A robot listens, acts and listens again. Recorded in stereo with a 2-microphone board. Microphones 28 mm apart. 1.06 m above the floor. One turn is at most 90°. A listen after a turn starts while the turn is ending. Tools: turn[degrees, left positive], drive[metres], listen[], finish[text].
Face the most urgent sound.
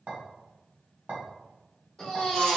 Thought: The baby crying: about 20° left or 160° left.
Action: turn[20]
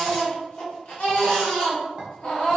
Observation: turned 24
Thought: So it is at 135° left.
Action: turn[90]
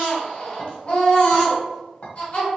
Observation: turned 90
Thought: The baby crying is now 45° left.
Action: turn[45]
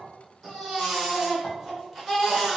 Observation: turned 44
Action: finish[Facing the baby crying, 1 to 2 m away.]